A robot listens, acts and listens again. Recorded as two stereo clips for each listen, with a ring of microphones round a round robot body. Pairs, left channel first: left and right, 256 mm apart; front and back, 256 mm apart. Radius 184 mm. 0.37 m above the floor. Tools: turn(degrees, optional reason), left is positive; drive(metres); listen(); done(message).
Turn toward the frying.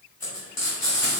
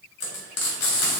turn(degrees=10, reason="The frying: 10° left.")
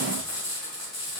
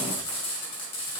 done("Found it: frying, straight ahead.")